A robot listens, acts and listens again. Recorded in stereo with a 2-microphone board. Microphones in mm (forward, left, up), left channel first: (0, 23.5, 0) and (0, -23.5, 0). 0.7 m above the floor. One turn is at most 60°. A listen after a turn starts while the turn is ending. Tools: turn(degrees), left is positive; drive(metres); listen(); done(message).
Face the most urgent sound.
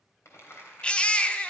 turn(degrees=25)
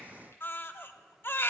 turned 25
turn(degrees=60)
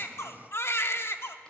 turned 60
turn(degrees=60)
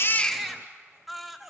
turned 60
done("Found it: a baby crying, straight ahead.")